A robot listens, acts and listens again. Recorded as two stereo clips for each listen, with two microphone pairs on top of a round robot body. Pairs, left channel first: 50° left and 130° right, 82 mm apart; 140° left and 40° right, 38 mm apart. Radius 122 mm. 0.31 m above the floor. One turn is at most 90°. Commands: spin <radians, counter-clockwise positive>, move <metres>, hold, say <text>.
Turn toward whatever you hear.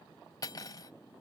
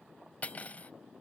spin 1.57
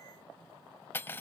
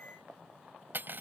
spin -0.17
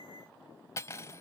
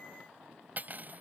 say Found it: cutlery clinking, straight ahead.